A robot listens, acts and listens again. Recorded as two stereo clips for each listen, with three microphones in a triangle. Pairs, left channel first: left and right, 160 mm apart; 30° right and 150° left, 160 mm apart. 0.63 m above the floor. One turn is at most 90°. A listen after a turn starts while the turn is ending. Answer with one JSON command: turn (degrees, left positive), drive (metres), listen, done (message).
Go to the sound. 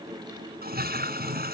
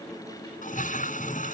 {"turn": -70}
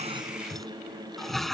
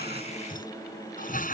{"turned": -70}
{"drive": 1.0}
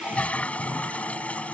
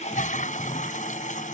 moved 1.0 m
{"turn": 10}
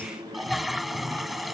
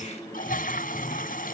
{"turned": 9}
{"drive": 1.0}
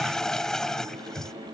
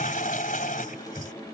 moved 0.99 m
{"drive": 1.0}
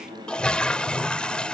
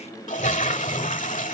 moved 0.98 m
{"drive": 1.0}
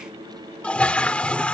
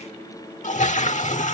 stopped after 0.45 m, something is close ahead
{"done": "I am next to the toilet flushing."}